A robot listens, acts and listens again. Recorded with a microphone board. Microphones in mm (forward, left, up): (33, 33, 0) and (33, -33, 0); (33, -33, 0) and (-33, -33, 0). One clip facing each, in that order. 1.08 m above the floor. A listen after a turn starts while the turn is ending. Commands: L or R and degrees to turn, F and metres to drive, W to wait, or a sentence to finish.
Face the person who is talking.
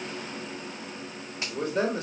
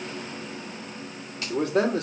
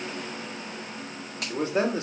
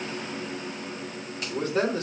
R65
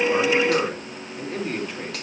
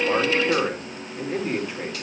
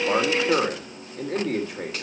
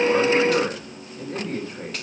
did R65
Facing the man speaking, 2 to 4 m away.